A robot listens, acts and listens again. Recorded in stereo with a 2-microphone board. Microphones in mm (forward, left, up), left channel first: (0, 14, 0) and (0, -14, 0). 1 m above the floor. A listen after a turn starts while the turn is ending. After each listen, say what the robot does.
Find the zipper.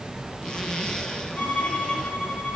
Turn 25° left.
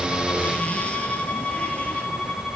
Keep listening.
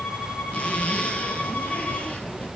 Turn 130° left.
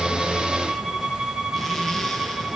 Keep listening.
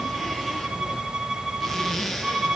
Facing the zipper.